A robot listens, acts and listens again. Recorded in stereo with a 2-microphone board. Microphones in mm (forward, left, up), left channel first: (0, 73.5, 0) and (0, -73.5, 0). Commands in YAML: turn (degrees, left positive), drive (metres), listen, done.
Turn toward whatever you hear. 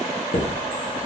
turn: 70
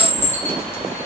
turn: 15
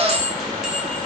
done: "Found it: a chime, straight ahead."